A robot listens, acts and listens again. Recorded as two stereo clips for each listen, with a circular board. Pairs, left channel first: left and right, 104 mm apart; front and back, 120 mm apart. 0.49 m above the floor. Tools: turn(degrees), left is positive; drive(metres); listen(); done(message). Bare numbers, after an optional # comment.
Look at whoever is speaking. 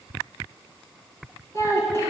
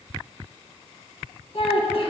# The child speaking: 30° left.
turn(30)
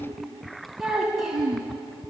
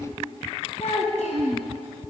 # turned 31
done("Found it: a child speaking, straight ahead.")